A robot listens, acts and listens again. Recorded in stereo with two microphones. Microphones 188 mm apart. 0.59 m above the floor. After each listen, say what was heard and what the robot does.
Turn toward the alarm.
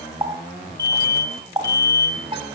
The alarm: about 65° right or 115° right. Turn 65° right.
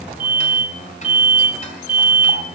So it is at 50° right. Turn 50° right.
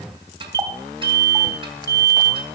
The alarm is now 15° left. Turn 15° left.
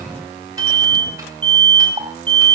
Facing the alarm.